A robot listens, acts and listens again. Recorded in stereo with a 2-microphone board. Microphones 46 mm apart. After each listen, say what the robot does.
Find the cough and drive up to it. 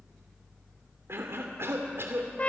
Turn 60° right.
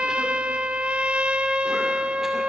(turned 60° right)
Keep listening.
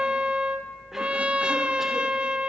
Keep listening.
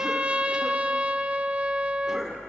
I heard a cough, but can't make it out now. It was about straight ahead or 60° right. I did not reach it.